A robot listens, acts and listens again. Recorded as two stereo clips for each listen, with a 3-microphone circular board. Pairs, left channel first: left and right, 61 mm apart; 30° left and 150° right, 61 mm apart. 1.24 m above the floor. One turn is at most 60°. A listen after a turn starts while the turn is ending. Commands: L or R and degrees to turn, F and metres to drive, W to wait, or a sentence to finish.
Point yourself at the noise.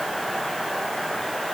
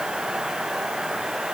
W
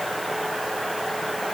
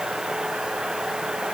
W
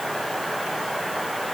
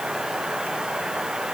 I can't make out anything.